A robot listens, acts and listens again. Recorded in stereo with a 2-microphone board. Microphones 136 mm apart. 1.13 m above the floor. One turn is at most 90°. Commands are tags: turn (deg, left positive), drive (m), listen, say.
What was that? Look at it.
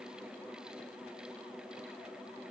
<listen/>
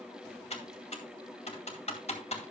<turn deg="55"/>
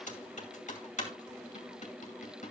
<turn deg="65"/>
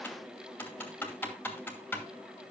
<turn deg="15"/>
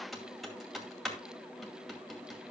<say>Facing the typing on a keyboard.</say>